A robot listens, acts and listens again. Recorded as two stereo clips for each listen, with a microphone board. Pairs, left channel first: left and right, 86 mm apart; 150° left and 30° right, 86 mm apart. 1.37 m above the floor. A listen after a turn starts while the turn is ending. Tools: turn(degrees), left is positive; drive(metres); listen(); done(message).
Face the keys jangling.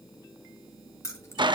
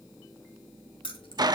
turn(degrees=145)
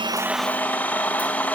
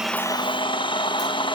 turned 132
turn(degrees=15)
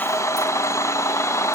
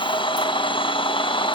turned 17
listen()
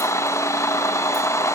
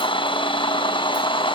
done("Facing where the keys jangling came from. I can't hear it now.")